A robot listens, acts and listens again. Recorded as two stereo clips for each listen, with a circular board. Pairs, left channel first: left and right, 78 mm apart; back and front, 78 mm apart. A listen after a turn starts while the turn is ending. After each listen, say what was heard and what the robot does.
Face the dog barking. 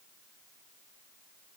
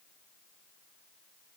Keep listening.
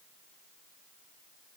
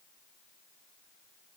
Keep listening.
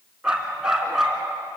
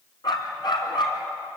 The dog barking: 175° right. Turn 175° right.
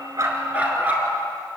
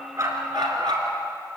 The dog barking is now 20° right. Turn 20° right.
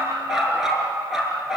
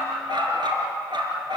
Found it: a dog barking, straight ahead.